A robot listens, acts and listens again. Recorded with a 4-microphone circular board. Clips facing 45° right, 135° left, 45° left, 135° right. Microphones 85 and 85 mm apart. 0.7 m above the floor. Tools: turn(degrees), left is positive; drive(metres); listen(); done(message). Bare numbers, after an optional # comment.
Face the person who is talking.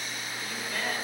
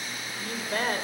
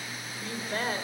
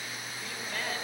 # The woman speaking: 95° left.
turn(95)
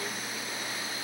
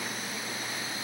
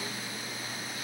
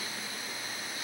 listen()
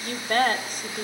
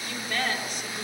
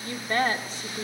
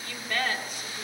done("Found it: a woman speaking, straight ahead.")